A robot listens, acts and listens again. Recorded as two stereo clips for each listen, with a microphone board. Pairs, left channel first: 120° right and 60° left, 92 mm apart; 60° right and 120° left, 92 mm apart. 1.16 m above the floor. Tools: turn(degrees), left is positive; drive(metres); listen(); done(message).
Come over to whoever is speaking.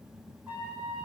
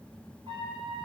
listen()
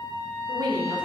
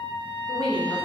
turn(degrees=20)
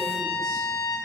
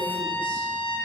listen()
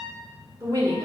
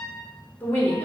turn(degrees=10)
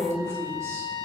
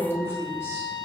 drive(metres=1.0)
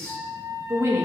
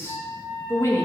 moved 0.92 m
drive(metres=1.0)
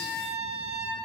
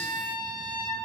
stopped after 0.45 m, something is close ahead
listen()
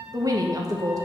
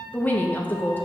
turn(degrees=10)
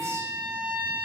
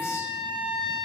listen()
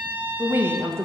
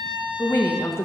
done("I am next to the woman speaking.")